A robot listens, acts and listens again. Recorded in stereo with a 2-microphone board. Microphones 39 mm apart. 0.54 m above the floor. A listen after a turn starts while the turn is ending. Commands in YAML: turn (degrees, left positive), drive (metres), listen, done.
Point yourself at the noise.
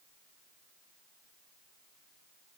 listen: true
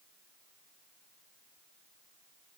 listen: true
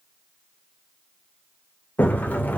turn: 50
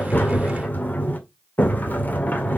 turn: 65
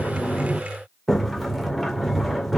done: "Facing the sliding door."